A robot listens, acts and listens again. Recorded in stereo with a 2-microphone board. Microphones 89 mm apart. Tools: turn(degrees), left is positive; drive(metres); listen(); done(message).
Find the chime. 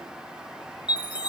turn(degrees=60)
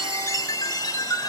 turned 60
turn(degrees=45)
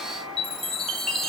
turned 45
done("Found it: a chime, straight ahead, 1 to 2 m away.")